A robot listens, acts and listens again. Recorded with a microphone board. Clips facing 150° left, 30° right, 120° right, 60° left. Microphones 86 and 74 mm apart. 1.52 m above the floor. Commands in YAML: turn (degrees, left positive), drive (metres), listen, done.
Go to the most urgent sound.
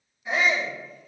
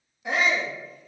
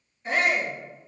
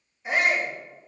turn: -20
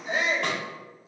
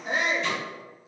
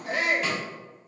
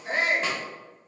drive: 1.0
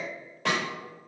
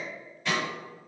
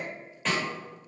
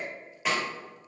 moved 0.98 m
listen: true
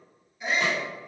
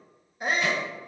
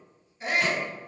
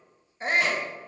turn: 10
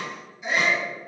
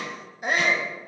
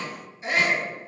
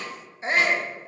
drive: 1.0
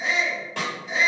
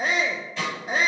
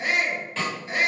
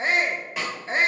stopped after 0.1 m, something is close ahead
done: "Arrived at the shout, straight ahead."